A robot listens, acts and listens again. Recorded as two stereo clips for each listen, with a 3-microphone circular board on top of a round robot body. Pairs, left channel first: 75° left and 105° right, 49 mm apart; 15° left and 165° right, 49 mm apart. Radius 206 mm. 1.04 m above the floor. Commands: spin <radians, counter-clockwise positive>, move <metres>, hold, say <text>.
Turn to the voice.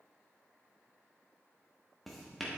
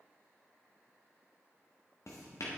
hold
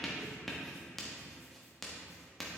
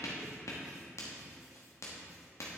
hold
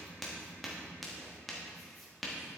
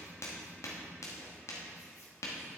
say I can't make out anyone speaking to turn to.